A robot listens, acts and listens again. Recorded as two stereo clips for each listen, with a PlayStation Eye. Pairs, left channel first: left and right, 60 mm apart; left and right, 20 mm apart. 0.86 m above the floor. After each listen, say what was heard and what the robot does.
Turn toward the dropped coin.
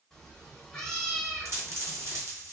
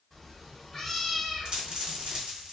The dropped coin: about 60° right or 120° right. Turn 60° right.
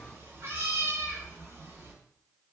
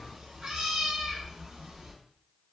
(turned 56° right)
Keep listening.
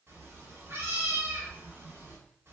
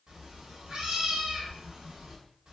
I heard a dropped coin, but can't make it out now. It was about 5° right or 65° right.